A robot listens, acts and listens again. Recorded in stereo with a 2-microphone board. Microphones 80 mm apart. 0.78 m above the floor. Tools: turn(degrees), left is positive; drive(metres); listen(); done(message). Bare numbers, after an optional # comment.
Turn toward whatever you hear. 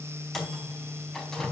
turn(30)
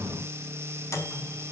# So it is at 140° left.
turn(140)
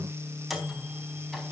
done("Facing the microwave.")